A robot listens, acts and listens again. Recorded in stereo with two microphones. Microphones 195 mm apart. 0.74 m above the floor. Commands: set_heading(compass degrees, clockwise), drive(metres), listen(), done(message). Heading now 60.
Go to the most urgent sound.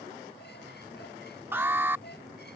set_heading(90)
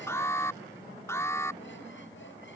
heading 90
set_heading(75)
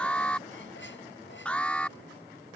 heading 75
drive(1.0)
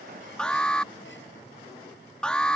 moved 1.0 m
drive(1.0)
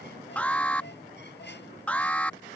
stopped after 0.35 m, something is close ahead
set_heading(65)
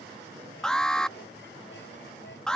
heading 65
done("Arrived at the alarm, straight ahead.")